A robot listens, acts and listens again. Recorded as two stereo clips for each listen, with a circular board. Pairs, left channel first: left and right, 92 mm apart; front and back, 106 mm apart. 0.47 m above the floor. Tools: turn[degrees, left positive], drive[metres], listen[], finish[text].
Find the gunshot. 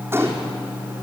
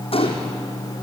Thought: The gunshot: 25° right.
Action: turn[-25]
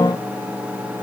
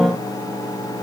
Action: finish[I heard a gunshot from this way, but can't make it out now.]